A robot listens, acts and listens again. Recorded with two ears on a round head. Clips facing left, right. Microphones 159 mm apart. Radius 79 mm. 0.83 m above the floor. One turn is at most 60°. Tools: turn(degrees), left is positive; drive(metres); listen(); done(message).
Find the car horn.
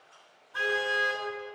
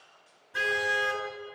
turn(degrees=-25)
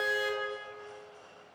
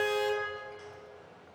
done("Found it: a car horn, straight ahead, over 4 m away.")